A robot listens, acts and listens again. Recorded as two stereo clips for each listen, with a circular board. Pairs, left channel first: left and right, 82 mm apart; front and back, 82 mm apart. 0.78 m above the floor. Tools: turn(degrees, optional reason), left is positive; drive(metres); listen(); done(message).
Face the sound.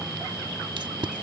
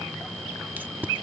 turn(degrees=-110, reason="The tape being pulled: 110° right.")
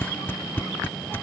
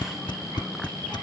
turn(degrees=25, reason="The tape being pulled is now 25° left.")
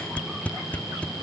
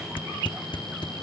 turn(degrees=20, reason="The tape being pulled is now 20° left.")
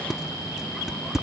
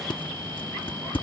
done("Facing the tape being pulled.")